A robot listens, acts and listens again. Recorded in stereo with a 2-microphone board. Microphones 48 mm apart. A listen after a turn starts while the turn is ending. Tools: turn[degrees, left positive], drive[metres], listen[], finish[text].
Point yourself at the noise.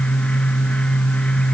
Action: listen[]
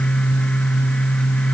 Action: listen[]
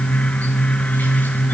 Action: finish[I can't make out anything.]